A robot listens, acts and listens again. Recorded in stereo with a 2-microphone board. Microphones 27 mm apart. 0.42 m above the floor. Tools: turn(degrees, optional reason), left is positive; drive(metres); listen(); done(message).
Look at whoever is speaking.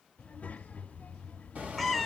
turn(degrees=65, reason="The child speaking: about 65° left or 115° left.")
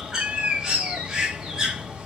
listen()
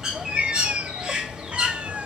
listen()
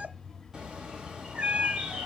turn(degrees=20, reason="So it is at 20° left.")
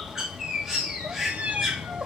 listen()
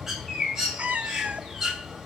listen()
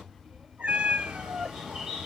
done("Found it: a child speaking, straight ahead.")